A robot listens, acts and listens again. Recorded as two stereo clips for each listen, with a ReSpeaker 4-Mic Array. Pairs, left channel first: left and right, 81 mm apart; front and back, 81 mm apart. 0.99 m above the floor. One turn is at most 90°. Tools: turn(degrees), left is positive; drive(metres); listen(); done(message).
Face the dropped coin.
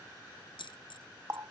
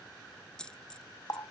turn(degrees=80)
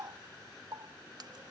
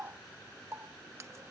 done("I heard a dropped coin from this way, but can't make it out now.")